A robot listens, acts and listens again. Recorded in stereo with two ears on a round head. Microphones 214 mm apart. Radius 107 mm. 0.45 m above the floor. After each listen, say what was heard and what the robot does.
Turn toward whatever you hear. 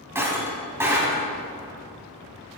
Turn 30° right.
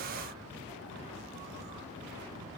Keep listening.
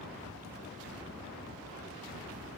I heard breaking glass, but can't make it out now. It was about 20° left or 140° right.